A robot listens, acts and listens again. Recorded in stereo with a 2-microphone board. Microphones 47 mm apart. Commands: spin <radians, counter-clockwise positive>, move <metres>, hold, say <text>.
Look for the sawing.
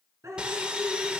spin -0.35
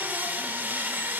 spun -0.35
spin -2.36
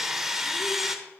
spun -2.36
spin -0.17
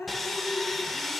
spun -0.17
say Found it: sawing, straight ahead.